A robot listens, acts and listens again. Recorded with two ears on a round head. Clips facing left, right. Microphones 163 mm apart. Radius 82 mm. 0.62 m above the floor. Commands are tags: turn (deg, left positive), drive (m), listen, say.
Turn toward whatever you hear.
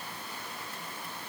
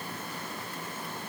<listen/>
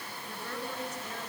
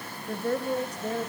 <turn deg="-30"/>
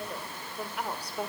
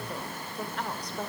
<turn deg="10"/>
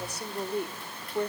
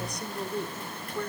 <turn deg="20"/>
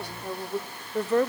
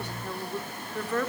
<turn deg="25"/>
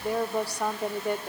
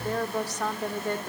<turn deg="10"/>
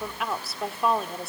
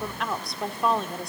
<say>Found it: a woman speaking, straight ahead, 1 to 2 m away.</say>